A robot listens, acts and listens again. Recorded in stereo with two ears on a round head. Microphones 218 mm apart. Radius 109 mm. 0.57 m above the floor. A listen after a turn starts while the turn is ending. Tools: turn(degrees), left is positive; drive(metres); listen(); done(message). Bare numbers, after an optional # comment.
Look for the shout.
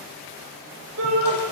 # The shout: about 60° right or 120° right.
turn(-60)
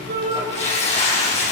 listen()
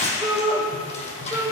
# So it is at 10° right.
turn(-10)
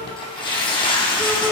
listen()
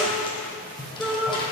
done("Facing the shout.")